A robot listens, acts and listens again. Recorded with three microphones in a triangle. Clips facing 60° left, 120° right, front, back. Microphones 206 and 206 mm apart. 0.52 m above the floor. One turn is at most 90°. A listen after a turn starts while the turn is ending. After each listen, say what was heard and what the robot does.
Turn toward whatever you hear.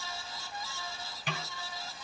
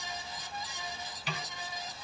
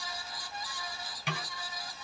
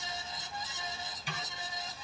The snare drum: 20° left. Turn 20° left.
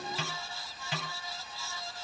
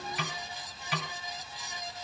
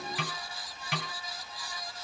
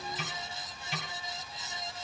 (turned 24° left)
Facing the snare drum, 2 to 4 m away.